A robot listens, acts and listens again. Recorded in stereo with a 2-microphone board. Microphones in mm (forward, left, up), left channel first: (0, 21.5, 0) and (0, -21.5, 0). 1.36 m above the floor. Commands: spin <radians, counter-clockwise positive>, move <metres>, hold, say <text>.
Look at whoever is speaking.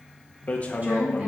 spin -0.61
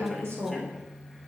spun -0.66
spin -1.92
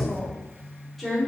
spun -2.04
say Found it: a woman speaking, straight ahead, 2 to 4 m away.